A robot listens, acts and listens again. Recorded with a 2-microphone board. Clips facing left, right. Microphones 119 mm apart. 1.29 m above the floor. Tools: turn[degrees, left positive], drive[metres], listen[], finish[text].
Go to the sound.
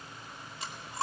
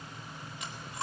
Thought: The chewing: about 35° left or 145° left.
Action: turn[35]
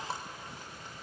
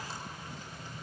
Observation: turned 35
Action: listen[]
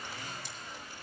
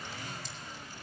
Action: listen[]
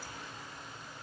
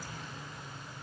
Action: finish[I heard chewing, but can't make it out now. It was about straight ahead or 110° left. I did not reach it.]